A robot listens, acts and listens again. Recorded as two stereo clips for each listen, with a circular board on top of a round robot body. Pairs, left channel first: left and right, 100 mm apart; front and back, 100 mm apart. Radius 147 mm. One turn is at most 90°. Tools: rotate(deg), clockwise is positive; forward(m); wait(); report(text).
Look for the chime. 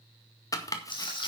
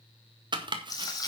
wait()
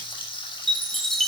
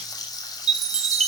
rotate(-90)
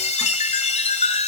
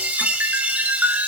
rotate(-90)
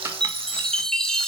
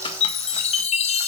report("Facing the chime, under 1 m away.")